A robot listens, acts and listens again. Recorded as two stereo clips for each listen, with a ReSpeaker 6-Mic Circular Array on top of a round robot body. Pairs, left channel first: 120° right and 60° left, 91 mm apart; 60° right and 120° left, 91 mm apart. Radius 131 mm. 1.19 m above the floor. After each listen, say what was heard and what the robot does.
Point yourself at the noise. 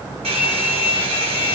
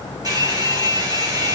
The hair dryer: 70° left. Turn 70° left.
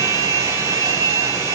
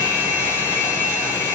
Facing the hair dryer, over 4 m away.